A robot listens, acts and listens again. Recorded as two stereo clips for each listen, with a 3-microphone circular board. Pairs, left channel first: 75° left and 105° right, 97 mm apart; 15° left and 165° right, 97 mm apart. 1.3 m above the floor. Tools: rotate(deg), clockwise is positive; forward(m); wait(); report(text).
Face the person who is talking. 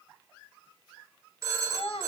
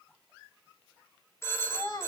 rotate(-60)
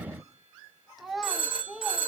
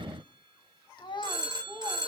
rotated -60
rotate(20)
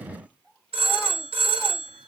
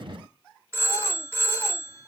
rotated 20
wait()
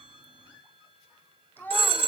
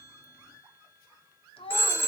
report("Facing the child speaking.")